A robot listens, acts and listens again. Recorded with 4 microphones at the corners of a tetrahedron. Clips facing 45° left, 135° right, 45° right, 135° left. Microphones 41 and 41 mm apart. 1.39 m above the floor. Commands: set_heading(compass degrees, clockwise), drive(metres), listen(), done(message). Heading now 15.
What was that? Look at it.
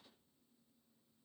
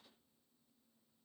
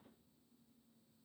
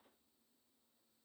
listen()
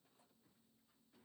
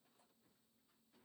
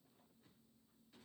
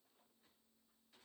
listen()
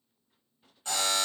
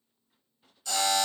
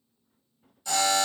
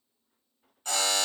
set_heading(280)
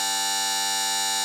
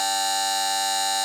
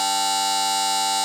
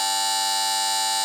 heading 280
set_heading(270)
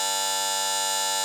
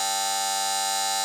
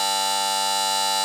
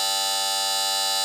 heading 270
done("Found it: a buzzer, straight ahead.")